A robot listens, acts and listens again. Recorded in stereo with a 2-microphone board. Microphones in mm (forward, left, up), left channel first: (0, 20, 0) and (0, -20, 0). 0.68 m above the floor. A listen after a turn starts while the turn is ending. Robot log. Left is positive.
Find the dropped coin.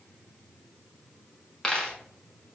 note: The dropped coin: about 25° left or 155° left.
cmd yaw +25
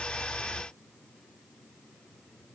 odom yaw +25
cmd idle
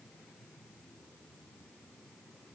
end: I heard a dropped coin, but can't make it out now. It was about straight ahead or 130° left.